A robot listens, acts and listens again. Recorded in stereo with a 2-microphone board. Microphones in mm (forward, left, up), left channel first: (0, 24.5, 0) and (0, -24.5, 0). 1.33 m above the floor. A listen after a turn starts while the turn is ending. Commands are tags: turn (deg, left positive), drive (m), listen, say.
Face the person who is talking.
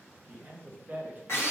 <turn deg="-35"/>
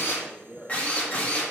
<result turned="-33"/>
<say>Facing the man speaking.</say>